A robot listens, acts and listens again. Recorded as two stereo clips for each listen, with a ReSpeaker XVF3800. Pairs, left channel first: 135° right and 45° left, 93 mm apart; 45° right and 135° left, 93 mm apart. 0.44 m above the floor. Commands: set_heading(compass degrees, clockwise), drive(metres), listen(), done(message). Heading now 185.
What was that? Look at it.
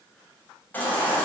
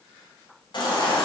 set_heading(250)
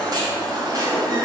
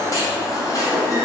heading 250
done("Found it: a baby crying, straight ahead, 2 to 4 m away.")